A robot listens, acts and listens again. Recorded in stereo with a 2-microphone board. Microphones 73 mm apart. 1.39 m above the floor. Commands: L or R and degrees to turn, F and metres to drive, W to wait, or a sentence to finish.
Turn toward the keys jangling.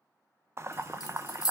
L70
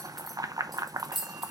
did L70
Found it: keys jangling, straight ahead.